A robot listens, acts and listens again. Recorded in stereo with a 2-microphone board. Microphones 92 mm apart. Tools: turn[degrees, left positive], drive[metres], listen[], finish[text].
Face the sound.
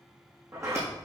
Thought: The sliding door: about 35° right or 145° right.
Action: turn[-35]
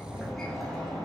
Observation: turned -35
Action: finish[Facing the sliding door.]